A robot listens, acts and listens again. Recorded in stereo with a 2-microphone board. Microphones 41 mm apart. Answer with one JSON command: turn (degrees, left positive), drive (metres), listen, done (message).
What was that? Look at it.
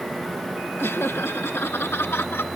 {"turn": 90}
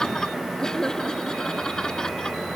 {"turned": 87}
{"turn": 15}
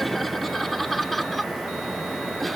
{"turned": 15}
{"done": "Found it: laughter, straight ahead."}